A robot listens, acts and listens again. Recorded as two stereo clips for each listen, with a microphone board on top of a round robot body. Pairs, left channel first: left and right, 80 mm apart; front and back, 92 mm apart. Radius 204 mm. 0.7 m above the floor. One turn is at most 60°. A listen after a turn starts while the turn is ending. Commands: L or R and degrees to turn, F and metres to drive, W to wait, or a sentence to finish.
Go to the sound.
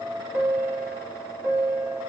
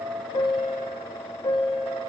R30
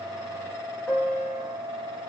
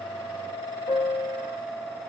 F1.0
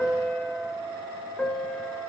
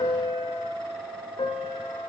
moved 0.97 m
L10
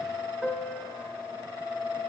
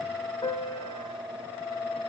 F1.0
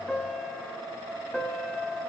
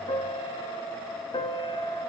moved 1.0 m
F1.0
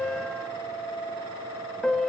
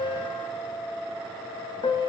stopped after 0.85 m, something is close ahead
L10
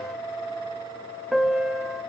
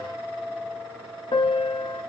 Arrived at the piano, straight ahead.